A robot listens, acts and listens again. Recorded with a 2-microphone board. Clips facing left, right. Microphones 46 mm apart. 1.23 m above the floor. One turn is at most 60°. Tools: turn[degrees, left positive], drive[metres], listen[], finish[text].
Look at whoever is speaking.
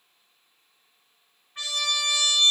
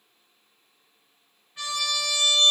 Action: listen[]
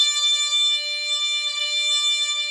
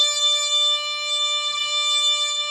Action: listen[]
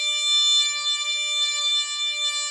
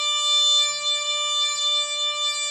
Action: finish[I can't make out anyone speaking to turn to.]